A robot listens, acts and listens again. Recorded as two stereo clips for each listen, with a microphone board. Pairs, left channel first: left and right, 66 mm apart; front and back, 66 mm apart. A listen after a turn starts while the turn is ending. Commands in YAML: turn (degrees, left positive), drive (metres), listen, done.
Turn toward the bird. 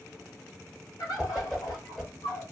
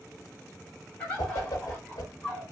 turn: 70
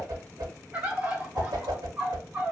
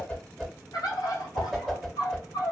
turn: -20
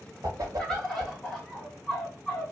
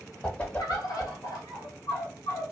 turn: 10
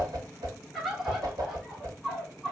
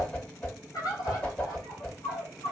done: "Found it: a bird, straight ahead, 1 to 2 m away."